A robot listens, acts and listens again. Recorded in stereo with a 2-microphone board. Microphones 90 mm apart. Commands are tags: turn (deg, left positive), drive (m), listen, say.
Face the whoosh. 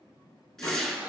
<turn deg="30"/>
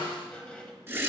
<turn deg="-25"/>
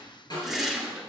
<say>Facing the whoosh.</say>